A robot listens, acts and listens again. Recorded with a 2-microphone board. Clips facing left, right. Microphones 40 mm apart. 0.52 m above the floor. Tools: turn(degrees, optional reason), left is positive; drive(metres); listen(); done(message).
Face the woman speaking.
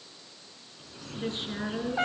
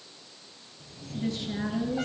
turn(degrees=40, reason="The woman speaking: about 40° left or 140° left.")
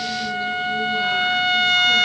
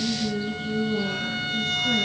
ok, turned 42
listen()
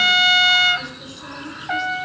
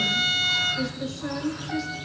done("Found it: a woman speaking, straight ahead.")